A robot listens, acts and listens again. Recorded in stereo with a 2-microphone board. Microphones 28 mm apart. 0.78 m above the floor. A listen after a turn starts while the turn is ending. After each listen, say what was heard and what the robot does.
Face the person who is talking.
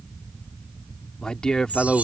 The man speaking: about 30° left or 150° left. Turn 30° left.
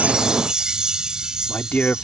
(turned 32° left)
So it is at 115° left. Turn 115° left.
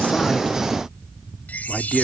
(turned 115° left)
Found it: a man speaking, straight ahead.